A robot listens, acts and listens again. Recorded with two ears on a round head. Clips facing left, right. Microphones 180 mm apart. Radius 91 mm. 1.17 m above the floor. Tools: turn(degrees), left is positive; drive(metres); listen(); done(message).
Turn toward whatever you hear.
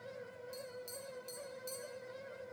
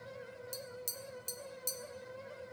turn(degrees=-60)
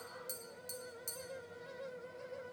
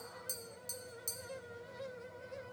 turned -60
done("Found it: tapping, straight ahead, 1 to 2 m away.")